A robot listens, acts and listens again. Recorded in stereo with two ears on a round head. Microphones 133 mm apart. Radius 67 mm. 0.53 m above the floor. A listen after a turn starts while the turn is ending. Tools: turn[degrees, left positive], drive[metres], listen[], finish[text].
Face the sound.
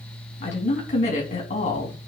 Thought: The woman speaking: about 50° left or 130° left.
Action: turn[50]
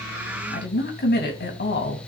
Thought: So it is at 75° left.
Action: turn[75]
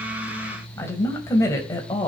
Thought: The woman speaking is now 25° left.
Action: turn[25]
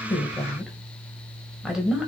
Action: finish[Facing the woman speaking, 2 to 4 m away.]